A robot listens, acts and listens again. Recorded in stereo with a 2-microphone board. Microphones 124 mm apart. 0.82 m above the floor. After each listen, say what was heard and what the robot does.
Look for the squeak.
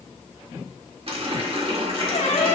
The squeak: about 75° left or 105° left. Turn 75° left.
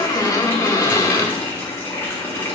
So it is at 30° left. Turn 30° left.
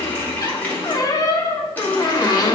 The squeak is now 30° left. Turn 30° left.
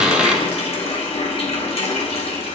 The squeak is now 10° right. Turn 10° right.
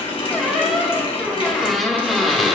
Facing the squeak.